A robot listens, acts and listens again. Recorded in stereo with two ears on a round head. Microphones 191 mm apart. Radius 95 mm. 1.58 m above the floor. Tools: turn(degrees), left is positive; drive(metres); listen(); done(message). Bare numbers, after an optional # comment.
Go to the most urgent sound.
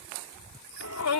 # The shout: about 75° left or 105° left.
turn(75)
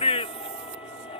# So it is at 30° left.
turn(30)
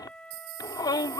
# The shout is now 20° left.
turn(20)
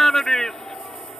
drive(1.0)
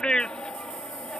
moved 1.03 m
drive(1.0)
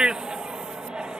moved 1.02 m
drive(1.0)
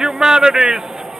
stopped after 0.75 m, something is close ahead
done("I am next to the shout.")